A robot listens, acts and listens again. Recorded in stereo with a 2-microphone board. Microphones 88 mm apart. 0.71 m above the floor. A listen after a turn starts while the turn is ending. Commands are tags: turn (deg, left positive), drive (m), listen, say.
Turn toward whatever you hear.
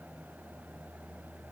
<listen/>
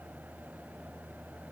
<listen/>
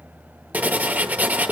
<turn deg="-20"/>
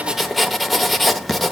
<say>Found it: writing, straight ahead.</say>